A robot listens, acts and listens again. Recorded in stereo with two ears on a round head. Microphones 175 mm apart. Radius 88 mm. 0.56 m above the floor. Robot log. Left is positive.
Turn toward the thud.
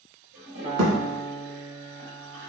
note: The thud: about 60° right or 120° right.
cmd yaw -60
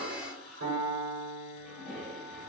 cmd idle
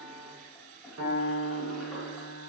end: I heard a thud, but can't make it out now. It was about straight ahead or 60° right.